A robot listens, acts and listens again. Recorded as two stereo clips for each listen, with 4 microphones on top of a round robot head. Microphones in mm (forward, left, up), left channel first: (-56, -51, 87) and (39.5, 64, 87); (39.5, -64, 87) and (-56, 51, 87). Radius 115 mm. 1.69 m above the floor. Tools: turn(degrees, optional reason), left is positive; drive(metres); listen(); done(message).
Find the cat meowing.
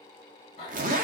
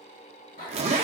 turn(degrees=-75, reason="The cat meowing: 75° right.")
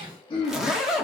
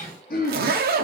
listen()
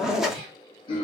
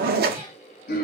listen()
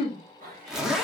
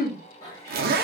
turn(degrees=15, reason="The cat meowing is now 15° left.")
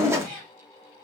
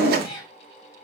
turn(degrees=10, reason="The cat meowing is now 10° left.")
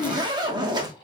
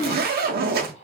listen()
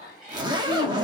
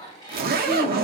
turn(degrees=15, reason="The cat meowing is now 15° left.")
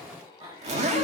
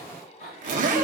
done("Found it: a cat meowing, straight ahead.")